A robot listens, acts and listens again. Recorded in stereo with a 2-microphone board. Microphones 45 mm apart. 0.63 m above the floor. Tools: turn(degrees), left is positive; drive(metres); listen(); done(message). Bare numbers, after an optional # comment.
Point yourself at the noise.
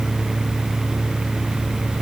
listen()
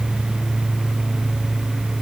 listen()
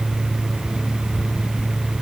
done("I can't make out anything to turn to.")